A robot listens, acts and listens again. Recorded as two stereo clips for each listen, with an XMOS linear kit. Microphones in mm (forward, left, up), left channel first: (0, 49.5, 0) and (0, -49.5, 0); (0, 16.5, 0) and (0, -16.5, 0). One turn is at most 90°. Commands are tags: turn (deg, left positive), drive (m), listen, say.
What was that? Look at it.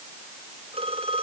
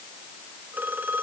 <turn deg="-90"/>
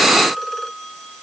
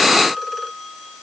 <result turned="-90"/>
<say>Facing the phone ringing.</say>